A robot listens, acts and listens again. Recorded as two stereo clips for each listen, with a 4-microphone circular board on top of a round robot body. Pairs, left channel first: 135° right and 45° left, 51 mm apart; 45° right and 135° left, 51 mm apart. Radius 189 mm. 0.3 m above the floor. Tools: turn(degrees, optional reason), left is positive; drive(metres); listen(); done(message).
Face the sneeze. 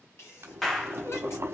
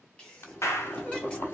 turn(degrees=-110, reason="The sneeze: 110° right.")
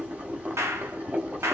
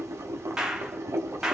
done("Facing where the sneeze came from. I can't hear it now.")